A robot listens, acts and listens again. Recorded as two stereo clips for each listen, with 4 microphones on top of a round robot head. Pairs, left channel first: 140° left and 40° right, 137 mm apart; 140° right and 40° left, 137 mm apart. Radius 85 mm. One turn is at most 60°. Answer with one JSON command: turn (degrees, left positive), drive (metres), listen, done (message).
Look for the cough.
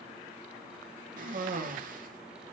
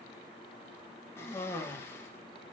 {"turn": -60}
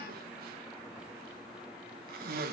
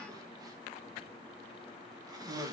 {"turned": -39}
{"turn": -25}
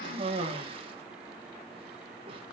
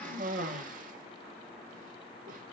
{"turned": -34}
{"turn": 10}
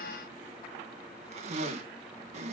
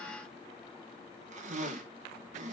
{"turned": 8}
{"done": "Found it: a cough, straight ahead, 1 to 2 m away."}